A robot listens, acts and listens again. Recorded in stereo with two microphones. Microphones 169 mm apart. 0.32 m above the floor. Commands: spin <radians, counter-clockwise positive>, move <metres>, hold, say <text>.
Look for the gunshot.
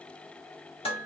hold
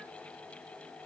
hold
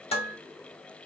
say I can't make out a gunshot, only dishes clattering.